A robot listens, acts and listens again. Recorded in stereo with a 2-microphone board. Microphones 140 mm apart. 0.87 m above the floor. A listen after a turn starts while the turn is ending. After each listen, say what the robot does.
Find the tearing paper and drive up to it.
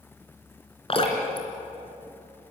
Keep listening.
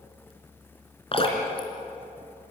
Keep listening.
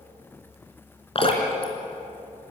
I can't make out tearing paper, only dripping.